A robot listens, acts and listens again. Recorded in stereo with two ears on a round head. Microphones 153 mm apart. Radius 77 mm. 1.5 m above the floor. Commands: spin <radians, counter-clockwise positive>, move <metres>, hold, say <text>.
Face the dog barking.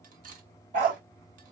spin -0.87
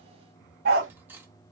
spin -1.05
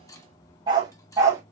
spin -0.35
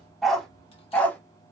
spin 0.17
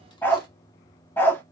spin 0.17
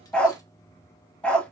say Found it: a dog barking, straight ahead.